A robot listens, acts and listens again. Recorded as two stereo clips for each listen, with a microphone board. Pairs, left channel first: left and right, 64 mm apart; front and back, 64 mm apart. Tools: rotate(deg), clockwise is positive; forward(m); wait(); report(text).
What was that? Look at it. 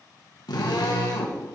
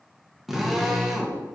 rotate(-90)
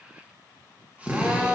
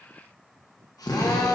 rotate(20)
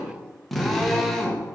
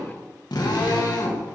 report("Facing the drill.")